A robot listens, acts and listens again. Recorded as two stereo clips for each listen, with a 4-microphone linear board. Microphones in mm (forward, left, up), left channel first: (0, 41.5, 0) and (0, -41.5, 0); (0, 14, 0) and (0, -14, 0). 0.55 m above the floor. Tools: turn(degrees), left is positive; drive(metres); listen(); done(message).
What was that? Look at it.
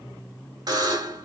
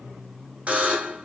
turn(degrees=-55)
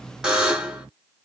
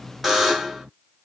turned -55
turn(degrees=-10)
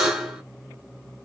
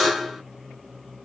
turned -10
done("Facing the buzzer.")